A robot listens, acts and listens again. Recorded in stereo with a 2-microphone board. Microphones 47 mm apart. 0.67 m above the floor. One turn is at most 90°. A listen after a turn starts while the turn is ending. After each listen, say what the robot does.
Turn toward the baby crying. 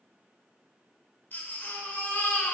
Turn 45° left.
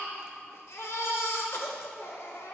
Turn 90° left.
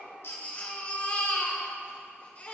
Turn 35° left.
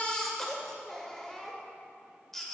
Facing the baby crying, 1 to 2 m away.